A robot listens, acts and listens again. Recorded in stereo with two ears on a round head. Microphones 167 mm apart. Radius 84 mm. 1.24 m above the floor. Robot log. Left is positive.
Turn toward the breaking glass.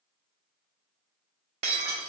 note: The breaking glass: about 30° right or 150° right.
cmd yaw -30
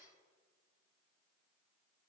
cmd idle
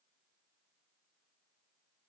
end: I heard breaking glass, but can't make it out now. It was about straight ahead or 120° right.